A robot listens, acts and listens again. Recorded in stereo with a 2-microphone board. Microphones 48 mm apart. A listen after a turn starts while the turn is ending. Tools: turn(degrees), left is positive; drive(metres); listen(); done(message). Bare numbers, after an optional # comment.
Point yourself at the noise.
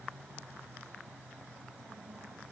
listen()
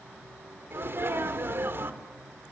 # The sneeze: about 55° right or 125° right.
turn(-55)
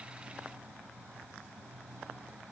listen()
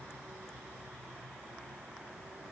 done("I heard a sneeze, but can't make it out now. It was about straight ahead or 70° right.")